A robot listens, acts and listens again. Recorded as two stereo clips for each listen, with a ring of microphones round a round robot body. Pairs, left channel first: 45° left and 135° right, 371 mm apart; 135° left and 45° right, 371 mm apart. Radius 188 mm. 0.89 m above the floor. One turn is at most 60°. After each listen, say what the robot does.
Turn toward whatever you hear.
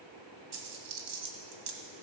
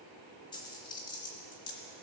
Turn 60° right.
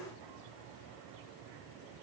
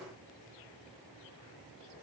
Turn 60° right.
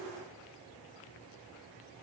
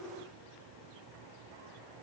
Turn 25° right.
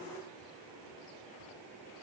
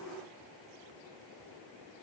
I heard a dropped coin from this way, but can't make it out now.